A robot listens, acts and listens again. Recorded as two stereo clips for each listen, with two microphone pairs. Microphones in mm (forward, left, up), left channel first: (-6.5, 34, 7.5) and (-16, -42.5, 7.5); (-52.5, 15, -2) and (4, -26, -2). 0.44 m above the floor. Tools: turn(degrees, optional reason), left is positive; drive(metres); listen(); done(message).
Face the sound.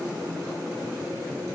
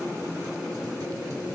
listen()
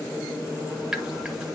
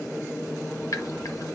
turn(degrees=180, reason="The dripping: straight behind.")
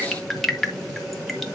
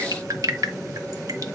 done("Found it: dripping, straight ahead, 1 to 2 m away.")